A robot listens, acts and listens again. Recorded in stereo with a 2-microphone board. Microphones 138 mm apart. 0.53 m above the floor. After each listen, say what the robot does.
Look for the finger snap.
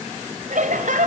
Keep listening.
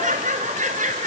Keep listening.
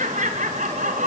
I can't make out a finger snap, only laughter.